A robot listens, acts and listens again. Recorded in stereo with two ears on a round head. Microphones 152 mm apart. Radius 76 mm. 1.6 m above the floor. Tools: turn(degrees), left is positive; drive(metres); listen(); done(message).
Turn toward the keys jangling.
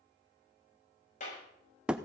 listen()
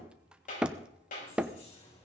turn(degrees=35)
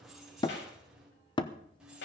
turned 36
done("Found it: keys jangling, straight ahead, over 4 m away.")